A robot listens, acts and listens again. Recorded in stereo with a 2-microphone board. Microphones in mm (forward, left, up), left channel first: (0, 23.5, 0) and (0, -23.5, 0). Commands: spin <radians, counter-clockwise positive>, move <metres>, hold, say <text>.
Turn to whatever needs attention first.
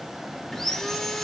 hold
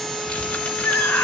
spin 0.87
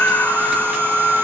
spin 1.13
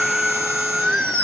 say Facing the scream.